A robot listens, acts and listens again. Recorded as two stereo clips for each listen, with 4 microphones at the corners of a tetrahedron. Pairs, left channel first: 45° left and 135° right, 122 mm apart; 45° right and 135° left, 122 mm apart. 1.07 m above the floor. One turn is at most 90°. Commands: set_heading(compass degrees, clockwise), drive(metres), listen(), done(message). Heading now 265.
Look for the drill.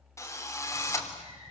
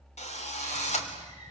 set_heading(285)
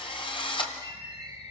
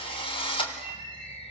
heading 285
done("Found it: a drill, straight ahead.")